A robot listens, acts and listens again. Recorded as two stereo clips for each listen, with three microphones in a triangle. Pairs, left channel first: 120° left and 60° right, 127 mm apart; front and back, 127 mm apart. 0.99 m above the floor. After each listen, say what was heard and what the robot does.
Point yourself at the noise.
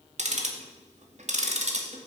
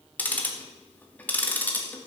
The ticking: 75° right. Turn 75° right.
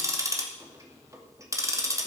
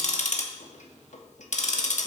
Found it: ticking, straight ahead.